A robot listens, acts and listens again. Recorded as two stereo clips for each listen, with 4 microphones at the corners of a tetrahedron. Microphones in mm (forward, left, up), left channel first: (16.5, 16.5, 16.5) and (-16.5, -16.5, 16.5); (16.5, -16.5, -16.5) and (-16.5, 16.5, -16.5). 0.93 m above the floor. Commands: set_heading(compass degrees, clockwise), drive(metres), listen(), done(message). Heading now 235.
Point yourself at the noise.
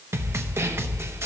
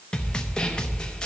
set_heading(350)
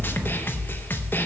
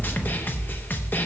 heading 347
done("Found it: a snare drum, straight ahead, under 1 m away.")